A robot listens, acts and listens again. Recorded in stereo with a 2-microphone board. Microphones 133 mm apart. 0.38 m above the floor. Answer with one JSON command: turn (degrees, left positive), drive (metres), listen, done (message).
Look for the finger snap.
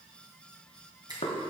{"turn": -30}
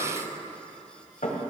{"listen": true}
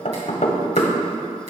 {"listen": true}
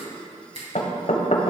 {"turn": -120}
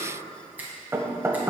{"turn": -15}
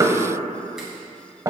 {"listen": true}
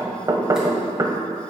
{"listen": true}
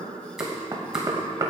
{"done": "I heard a finger snap from this way, but can't make it out now."}